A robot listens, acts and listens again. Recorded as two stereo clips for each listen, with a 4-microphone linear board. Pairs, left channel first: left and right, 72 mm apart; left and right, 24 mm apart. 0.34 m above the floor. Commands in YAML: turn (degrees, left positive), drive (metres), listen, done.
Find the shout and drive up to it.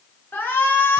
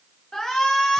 turn: 25
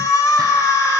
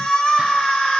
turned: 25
turn: 130
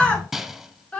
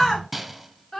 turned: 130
turn: 20
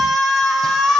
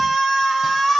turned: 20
drive: 1.0
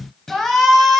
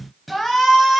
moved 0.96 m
drive: 1.0
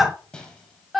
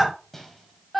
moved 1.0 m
drive: 1.0
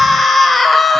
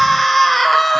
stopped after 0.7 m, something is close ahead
done: "I am next to the shout."